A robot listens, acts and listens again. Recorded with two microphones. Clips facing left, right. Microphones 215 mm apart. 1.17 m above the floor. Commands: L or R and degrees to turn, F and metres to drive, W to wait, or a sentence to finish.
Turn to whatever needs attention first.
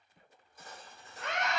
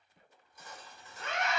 L70
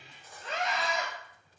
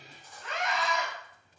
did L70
L40
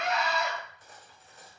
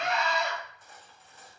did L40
Found it: a scream, straight ahead.